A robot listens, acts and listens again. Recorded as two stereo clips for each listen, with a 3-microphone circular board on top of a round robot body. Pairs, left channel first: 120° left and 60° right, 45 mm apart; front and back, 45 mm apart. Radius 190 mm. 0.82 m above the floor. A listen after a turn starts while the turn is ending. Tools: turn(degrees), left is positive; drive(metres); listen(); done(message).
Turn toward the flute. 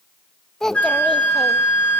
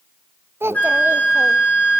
turn(degrees=55)
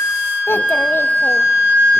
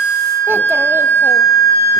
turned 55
turn(degrees=10)
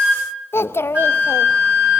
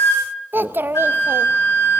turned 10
done("Found it: a flute, straight ahead.")